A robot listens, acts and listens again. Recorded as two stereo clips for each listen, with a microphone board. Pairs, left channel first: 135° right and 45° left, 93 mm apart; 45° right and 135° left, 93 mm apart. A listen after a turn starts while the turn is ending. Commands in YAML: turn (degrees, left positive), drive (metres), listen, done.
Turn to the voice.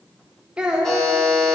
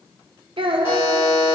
turn: 125
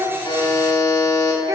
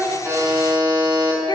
done: "Found it: a child speaking, straight ahead, under 1 m away."